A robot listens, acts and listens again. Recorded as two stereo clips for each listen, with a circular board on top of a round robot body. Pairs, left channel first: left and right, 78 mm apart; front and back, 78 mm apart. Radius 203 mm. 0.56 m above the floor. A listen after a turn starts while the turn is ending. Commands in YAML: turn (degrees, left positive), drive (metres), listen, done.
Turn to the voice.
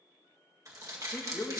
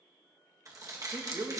turn: 145
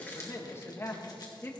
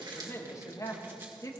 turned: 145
turn: 40
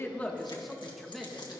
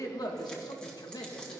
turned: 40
done: "Facing the woman speaking."